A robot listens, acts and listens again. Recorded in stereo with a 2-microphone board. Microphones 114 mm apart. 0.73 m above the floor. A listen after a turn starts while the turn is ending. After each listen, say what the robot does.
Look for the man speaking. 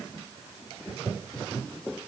Keep listening.
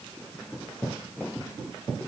Keep listening.
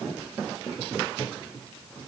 I can't make out a man speaking to turn to.